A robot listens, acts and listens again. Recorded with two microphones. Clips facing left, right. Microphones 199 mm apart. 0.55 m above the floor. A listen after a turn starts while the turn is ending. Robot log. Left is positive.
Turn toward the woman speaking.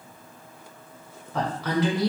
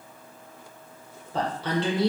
note: The woman speaking: about 25° right or 155° right.
cmd yaw -25
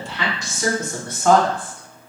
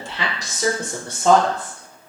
note: The woman speaking: about 20° right or 160° right.
cmd yaw -20
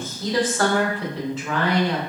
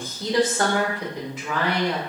cmd yaw -30
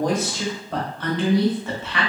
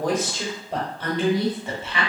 note: The woman speaking: about 25° right or 155° right.
cmd yaw -25
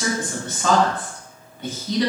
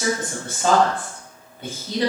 note: So it is at 130° right.
cmd yaw -130
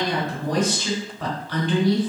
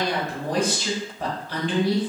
note: The woman speaking is now 35° right.
cmd yaw -35
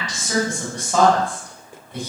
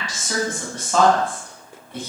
note: The woman speaking is now 15° left.
cmd yaw +15
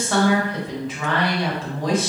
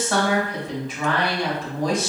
end: Found it: a woman speaking, straight ahead.